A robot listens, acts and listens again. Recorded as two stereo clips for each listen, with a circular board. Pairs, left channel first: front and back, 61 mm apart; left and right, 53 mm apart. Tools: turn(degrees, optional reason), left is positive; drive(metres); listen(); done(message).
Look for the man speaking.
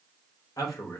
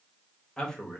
turn(degrees=20, reason="The man speaking: 20° left.")
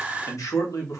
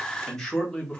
turn(degrees=20, reason="The man speaking is now 20° left.")
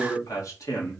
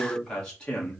turn(degrees=25, reason="The man speaking is now 25° left.")
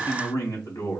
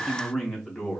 done("Found it: a man speaking, straight ahead.")